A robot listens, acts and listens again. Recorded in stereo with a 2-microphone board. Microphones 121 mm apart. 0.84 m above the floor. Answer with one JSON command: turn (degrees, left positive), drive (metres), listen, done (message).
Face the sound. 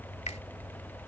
{"turn": 70}
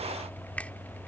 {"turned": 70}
{"turn": 15}
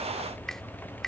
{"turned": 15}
{"done": "Facing the finger snap."}